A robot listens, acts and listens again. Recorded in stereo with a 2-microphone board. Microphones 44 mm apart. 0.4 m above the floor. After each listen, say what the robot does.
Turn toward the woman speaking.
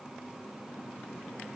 Keep listening.
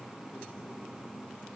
Keep listening.
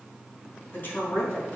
Turn 45° left.
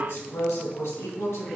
Turn 105° left.
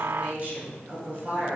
Turn 35° right.
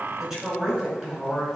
Turn 10° right.
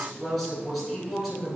Facing the woman speaking.